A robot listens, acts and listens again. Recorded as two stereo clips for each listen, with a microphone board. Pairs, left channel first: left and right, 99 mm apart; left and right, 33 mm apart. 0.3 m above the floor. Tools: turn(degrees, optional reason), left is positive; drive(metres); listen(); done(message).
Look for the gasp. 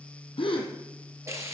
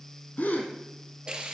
turn(degrees=65, reason="The gasp: about 65° left or 115° left.")
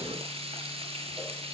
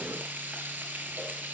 listen()
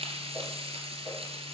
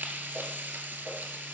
done("I heard a gasp, but can't make it out now. It was about straight ahead or 50° left.")